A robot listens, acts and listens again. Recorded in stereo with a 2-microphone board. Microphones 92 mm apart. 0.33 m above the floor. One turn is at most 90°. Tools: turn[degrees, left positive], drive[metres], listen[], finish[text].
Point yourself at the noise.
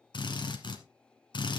Thought: The drill: about 60° left or 120° left.
Action: turn[60]
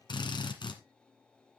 Thought: So it is at 60° left.
Action: turn[60]
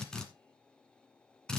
Thought: The drill is now 10° left.
Action: turn[10]
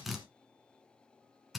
Action: finish[Facing the drill, 1 to 2 m away.]